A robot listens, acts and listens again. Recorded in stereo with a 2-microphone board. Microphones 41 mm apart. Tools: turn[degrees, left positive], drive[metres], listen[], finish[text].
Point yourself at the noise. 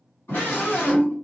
Thought: The scream: about 70° left or 110° left.
Action: turn[70]
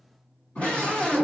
Thought: So it is at 40° left.
Action: turn[40]
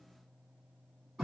Action: finish[Facing the scream, 1 to 2 m away.]